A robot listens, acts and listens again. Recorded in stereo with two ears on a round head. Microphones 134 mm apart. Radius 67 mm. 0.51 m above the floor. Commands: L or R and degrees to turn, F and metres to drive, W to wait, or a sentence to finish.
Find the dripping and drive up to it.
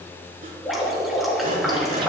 L30
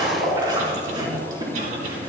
R30
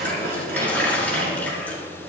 L10
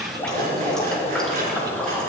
F1.0
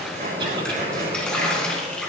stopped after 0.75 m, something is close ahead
Blocked. The dripping is further on, straight ahead.